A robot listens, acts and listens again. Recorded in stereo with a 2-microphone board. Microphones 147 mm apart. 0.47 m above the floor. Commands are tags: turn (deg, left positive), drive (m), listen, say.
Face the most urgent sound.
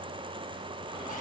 <listen/>
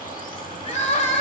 <turn deg="50"/>
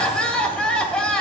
<turn deg="10"/>
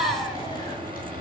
<say>Facing the crying.</say>